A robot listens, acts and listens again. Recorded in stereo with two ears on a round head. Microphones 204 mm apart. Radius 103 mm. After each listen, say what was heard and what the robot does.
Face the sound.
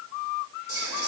The whispering: about 45° left or 135° left. Turn 45° left.
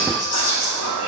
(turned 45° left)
So it is at 85° left. Turn 85° left.
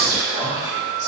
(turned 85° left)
The whispering is now 20° left. Turn 20° left.
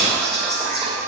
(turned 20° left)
Found it: whispering, straight ahead.